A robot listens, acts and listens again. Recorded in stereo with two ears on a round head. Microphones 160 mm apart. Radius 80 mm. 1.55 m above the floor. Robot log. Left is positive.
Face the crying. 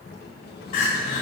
note: The crying: about 55° left or 125° left.
cmd yaw +55
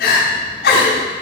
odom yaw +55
note: So it is at 65° left.
cmd yaw +65
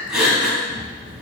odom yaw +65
end: Found it: crying, straight ahead, 2 to 4 m away.